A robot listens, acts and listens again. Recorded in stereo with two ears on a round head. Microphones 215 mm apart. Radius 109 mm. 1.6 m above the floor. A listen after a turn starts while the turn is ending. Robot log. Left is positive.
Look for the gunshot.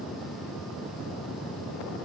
cmd idle
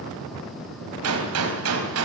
note: The gunshot: about 70° right or 110° right.
cmd yaw -70
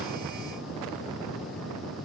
cmd idle
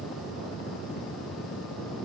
end: I heard a gunshot, but can't make it out now. It was about straight ahead or 40° right.